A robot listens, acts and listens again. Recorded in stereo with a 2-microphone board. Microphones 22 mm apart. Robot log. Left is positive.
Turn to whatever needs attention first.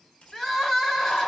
note: The crying: about 20° left or 160° left.
cmd yaw +20
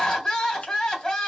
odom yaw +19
note: So it is at 145° left.
cmd yaw +145
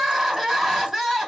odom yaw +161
note: The crying is now 20° right.
cmd yaw -20
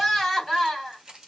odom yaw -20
end: Facing the crying, 1 to 2 m away.